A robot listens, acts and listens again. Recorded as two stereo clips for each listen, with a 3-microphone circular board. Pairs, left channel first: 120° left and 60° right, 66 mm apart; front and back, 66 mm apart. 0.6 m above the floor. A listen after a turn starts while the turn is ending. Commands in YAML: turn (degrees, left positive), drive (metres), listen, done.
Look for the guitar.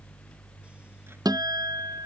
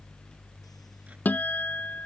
turn: -65
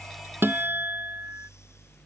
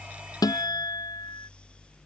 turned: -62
done: "Facing the guitar."